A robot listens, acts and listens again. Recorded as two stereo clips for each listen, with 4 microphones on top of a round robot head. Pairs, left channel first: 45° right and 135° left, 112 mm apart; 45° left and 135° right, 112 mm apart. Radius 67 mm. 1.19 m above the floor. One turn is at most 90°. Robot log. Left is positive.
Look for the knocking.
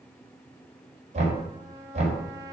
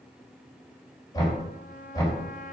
note: The knocking: 105° left.
cmd yaw +90
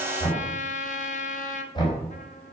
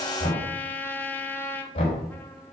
end: Facing the knocking.